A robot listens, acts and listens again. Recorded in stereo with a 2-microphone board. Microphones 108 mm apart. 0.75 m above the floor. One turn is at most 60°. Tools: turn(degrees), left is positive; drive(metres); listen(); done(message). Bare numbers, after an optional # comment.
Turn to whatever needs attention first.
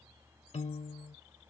listen()
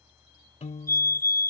# The fire alarm: about 25° left or 155° left.
turn(25)
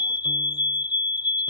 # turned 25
# So it is at 130° left.
turn(60)
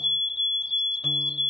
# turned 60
# The fire alarm is now 80° left.
turn(60)
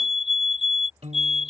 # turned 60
done("Facing the fire alarm.")